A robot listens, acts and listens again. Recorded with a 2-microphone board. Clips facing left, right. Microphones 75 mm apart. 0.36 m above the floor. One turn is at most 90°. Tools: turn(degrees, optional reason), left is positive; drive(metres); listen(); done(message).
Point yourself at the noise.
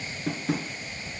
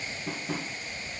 turn(degrees=70, reason="The tapping: about 70° left or 110° left.")
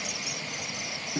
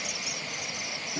listen()
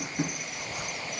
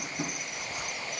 turn(degrees=35, reason="So it is at 35° left.")
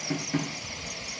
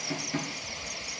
turn(degrees=15, reason="The tapping is now 15° left.")
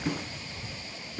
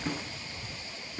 done("Facing the tapping, 1 to 2 m away.")